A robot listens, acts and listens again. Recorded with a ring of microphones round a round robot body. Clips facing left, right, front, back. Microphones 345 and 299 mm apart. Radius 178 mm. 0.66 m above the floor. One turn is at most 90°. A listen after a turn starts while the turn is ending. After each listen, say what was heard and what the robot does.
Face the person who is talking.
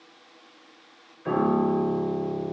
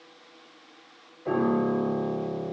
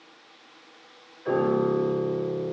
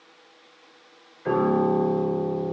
Keep listening.
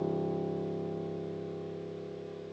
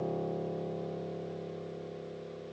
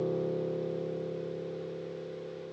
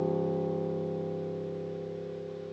Keep listening.
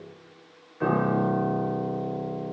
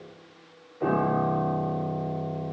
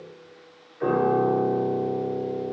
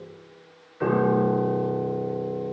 I can't make out anyone speaking, only a piano.